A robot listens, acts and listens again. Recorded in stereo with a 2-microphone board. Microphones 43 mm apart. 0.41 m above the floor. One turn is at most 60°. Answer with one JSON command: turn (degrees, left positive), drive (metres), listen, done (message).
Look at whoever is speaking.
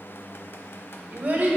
{"turn": -45}
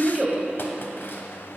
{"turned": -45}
{"turn": -15}
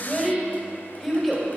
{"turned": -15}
{"done": "Found it: a child speaking, straight ahead, 1 to 2 m away."}